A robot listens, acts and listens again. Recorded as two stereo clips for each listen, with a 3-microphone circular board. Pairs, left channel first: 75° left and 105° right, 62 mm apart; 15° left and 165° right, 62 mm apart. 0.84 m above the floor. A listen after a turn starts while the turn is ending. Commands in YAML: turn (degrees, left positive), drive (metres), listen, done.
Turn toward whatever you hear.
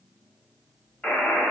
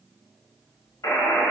done: "Facing the buzzer, under 1 m away."